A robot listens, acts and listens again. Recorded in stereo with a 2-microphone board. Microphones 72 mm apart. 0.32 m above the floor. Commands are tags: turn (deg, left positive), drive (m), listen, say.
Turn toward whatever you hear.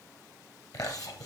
<turn deg="55"/>
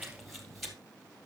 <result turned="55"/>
<say>Facing the chewing, 2 to 4 m away.</say>